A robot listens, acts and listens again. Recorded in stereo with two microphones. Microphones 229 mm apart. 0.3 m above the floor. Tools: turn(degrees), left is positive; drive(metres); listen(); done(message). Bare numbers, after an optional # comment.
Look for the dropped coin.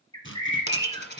# The dropped coin: about 50° left or 130° left.
turn(50)
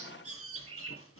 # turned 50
listen()
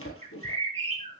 done("I heard a dropped coin, but can't make it out now. It was about straight ahead or 80° left.")